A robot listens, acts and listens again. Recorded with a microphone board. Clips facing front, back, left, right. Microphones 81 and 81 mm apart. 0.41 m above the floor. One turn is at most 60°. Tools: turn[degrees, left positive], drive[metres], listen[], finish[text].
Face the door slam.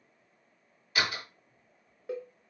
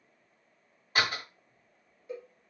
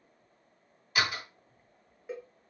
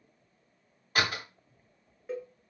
Thought: The door slam: 130° right.
Action: turn[-60]
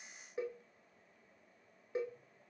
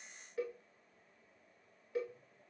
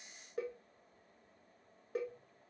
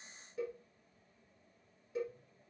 Thought: Nothing new. It was at 70° right.
Action: turn[-60]
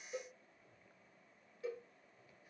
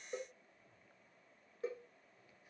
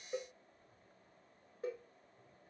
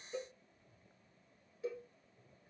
Thought: Nothing new. It was at 10° right.
Action: turn[-10]
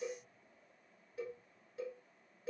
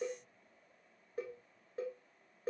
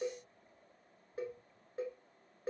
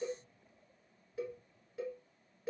Action: finish[I heard a door slam from this way, but can't make it out now.]